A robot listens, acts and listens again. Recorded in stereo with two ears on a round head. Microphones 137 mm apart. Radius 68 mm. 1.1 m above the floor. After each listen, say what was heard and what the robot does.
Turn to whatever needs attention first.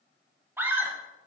Turn 30° right.
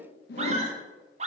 So it is at 135° right. Turn 135° right.
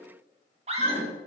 The scream is now 45° right. Turn 45° right.
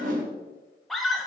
Found it: a scream, straight ahead.